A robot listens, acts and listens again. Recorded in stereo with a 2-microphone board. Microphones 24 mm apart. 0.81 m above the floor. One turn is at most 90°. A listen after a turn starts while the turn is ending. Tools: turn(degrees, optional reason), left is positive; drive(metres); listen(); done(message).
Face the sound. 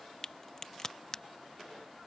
turn(degrees=20, reason="The crack: about 20° left or 160° left.")
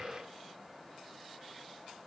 listen()
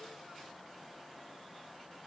done("I heard a crack, but can't make it out now. It was about straight ahead or 140° left.")